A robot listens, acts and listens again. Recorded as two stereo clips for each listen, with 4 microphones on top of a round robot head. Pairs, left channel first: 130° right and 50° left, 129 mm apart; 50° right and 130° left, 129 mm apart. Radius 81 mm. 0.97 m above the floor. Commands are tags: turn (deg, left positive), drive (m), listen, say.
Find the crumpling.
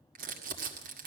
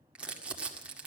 <turn deg="50"/>
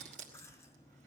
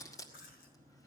<turn deg="15"/>
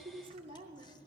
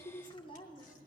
<say>Found it: crumpling, straight ahead.</say>